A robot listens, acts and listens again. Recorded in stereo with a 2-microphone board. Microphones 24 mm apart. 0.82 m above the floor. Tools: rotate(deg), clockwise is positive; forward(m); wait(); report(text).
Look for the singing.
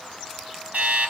wait()
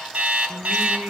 rotate(45)
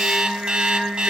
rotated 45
rotate(110)
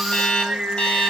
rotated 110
rotate(45)
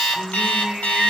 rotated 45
rotate(20)
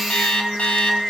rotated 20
report("Found it: singing, straight ahead.")